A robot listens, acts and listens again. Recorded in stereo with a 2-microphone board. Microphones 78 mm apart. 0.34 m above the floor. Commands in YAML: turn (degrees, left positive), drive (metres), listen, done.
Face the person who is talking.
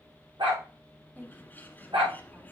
turn: -25
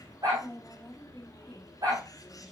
done: "Facing the woman speaking, 2 to 4 m away."